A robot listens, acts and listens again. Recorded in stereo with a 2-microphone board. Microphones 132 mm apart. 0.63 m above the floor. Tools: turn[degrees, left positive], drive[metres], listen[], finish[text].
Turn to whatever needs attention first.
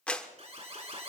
Thought: The alarm: about 50° right or 130° right.
Action: turn[-50]
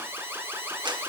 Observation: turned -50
Thought: So it is at 20° right.
Action: turn[-20]
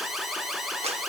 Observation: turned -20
Action: finish[Facing the alarm.]